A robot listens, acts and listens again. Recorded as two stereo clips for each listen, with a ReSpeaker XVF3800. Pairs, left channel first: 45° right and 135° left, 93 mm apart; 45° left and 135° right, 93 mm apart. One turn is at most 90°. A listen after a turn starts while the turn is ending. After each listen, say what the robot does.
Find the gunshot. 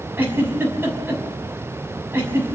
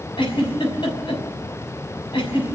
Keep listening.
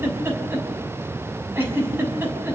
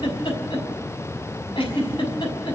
Keep listening.
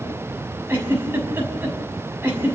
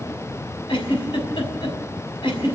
I can't make out a gunshot, only a giggle.